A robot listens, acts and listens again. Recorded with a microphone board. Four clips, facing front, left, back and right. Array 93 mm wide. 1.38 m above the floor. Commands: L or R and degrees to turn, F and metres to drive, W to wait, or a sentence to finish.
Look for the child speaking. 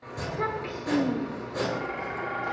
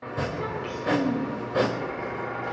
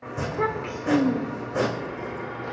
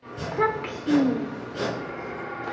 R95
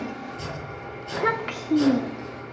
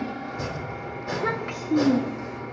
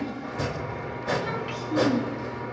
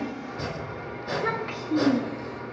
L15
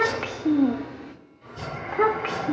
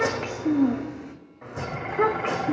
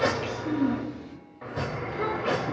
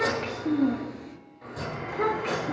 L30
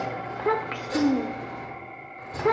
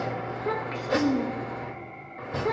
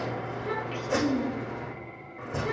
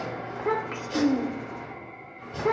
R15
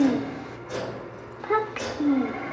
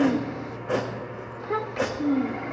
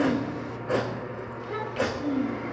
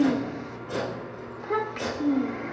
Found it: a child speaking, straight ahead, 1 to 2 m away.